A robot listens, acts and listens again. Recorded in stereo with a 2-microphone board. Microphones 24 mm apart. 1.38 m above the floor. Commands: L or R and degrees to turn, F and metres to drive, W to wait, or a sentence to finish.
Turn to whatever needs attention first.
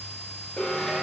L75
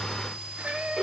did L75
Found it: an alarm, straight ahead, over 4 m away.